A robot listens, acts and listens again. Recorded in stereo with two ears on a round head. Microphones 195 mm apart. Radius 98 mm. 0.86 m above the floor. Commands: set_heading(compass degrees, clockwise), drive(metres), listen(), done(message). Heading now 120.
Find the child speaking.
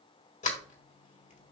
listen()
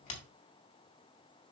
listen()
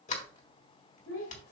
set_heading(55)
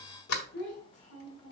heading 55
set_heading(350)
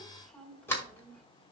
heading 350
done("Found it: a child speaking, straight ahead, 1 to 2 m away.")